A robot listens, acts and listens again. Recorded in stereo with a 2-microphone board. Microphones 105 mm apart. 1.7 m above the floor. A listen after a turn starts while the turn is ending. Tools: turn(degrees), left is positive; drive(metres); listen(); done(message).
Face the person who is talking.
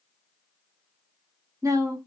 turn(degrees=-30)
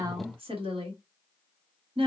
turn(degrees=-120)
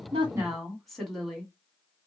done("Found it: a woman speaking, straight ahead.")